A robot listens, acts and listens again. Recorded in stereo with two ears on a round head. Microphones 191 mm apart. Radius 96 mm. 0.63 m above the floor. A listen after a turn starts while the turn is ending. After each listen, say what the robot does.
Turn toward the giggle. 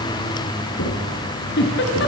Turn 55° left.
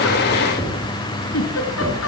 Turn 70° left.
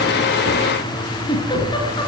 Turn 20° left.
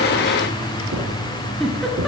Facing the giggle, over 4 m away.